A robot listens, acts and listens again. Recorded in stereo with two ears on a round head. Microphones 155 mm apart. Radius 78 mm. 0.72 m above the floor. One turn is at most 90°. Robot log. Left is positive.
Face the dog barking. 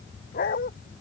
note: The dog barking: about 50° left or 130° left.
cmd yaw +50
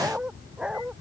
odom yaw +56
end: Facing the dog barking.